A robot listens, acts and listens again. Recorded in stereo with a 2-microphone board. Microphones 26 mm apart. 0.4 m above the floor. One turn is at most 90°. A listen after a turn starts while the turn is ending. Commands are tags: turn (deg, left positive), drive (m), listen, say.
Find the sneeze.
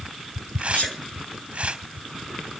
<turn deg="75"/>
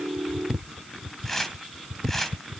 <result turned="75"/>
<listen/>
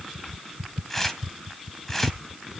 <say>I heard a sneeze, but can't make it out now. It was about straight ahead or 30° left.</say>